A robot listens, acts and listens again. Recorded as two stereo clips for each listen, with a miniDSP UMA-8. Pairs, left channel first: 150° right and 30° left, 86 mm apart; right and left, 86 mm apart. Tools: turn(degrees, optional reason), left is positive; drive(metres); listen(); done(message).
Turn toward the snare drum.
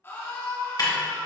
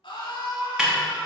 turn(degrees=170, reason="The snare drum: 170° left.")
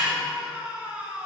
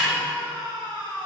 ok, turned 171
done("Facing the snare drum.")